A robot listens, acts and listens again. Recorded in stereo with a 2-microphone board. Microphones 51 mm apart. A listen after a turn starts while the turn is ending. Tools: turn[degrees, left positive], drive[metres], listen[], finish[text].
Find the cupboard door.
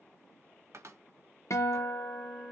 Thought: The cupboard door: about 65° right or 115° right.
Action: turn[-65]
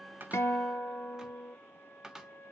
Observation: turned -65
Thought: So it is at 15° right.
Action: turn[-15]
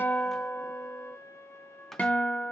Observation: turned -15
Action: finish[Facing the cupboard door.]